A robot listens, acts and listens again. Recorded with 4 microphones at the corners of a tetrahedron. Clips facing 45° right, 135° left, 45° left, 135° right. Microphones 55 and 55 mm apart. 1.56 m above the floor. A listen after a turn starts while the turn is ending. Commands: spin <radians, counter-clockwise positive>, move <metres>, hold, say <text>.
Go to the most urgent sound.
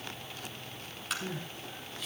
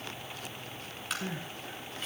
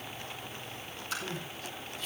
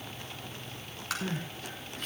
spin -2.97
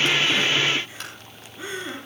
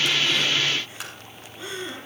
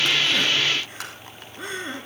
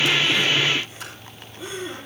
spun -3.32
spin 0.35
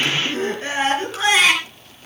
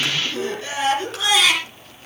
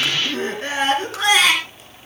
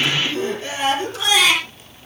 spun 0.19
spin 0.17
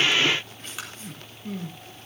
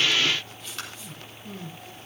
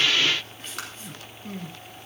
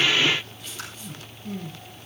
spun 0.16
move 1.0
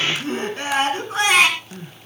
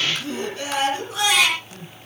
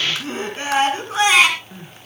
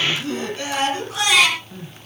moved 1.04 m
move 1.0
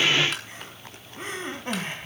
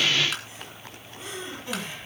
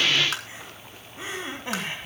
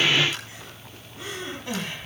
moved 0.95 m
spin -0.26
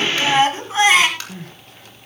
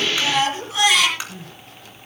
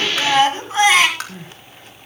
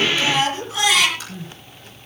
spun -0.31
move 1.0
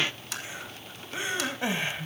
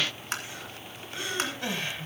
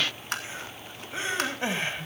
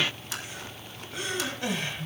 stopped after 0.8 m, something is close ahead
spin 0.17
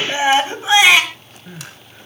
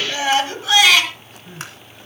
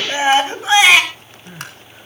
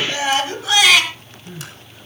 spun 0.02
say Arrived at the crying, straight ahead.